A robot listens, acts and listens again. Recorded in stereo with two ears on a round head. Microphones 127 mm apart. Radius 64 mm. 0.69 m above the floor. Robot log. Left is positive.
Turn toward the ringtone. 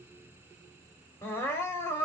cmd idle
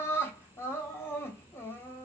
cmd idle
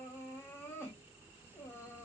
end: I can't make out a ringtone, only crying.